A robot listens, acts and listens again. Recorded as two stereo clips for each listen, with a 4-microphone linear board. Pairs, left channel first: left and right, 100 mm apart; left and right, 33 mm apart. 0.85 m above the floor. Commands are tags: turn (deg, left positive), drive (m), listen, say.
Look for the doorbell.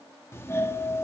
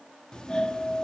<turn deg="25"/>
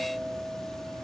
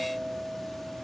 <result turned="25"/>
<say>Found it: a doorbell, straight ahead.</say>